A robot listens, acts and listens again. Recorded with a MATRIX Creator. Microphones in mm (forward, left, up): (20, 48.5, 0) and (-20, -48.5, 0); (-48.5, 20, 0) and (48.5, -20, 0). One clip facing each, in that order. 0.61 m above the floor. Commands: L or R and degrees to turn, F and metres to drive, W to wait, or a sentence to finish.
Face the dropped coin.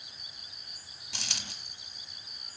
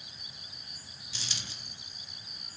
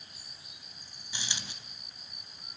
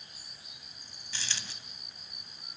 L85
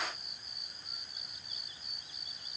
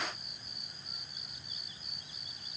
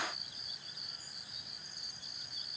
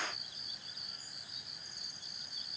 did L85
Facing where the dropped coin came from. I can't hear it now.